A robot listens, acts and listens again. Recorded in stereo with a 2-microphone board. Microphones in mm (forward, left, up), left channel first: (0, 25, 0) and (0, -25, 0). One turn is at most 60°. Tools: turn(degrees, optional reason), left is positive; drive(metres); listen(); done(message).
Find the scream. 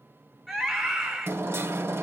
turn(degrees=-30)
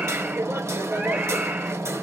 listen()
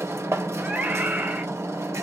turn(degrees=-60, reason="So it is at 145° right.")
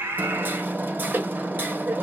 turn(degrees=-60, reason="The scream is now 95° right.")
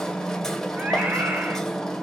turn(degrees=-35, reason="Nothing new. It was at 35° right.")
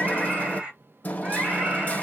turn(degrees=-20, reason="The scream is now 20° right.")
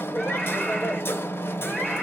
listen()
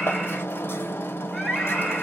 done("Found it: a scream, straight ahead, 1 to 2 m away.")